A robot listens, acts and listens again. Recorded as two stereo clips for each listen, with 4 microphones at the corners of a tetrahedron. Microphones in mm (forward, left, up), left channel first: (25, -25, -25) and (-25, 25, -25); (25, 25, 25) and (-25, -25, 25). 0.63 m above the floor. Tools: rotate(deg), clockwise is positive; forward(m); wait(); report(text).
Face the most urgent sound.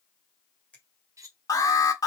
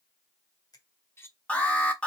rotate(25)
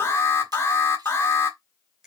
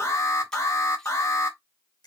report("Facing the alarm.")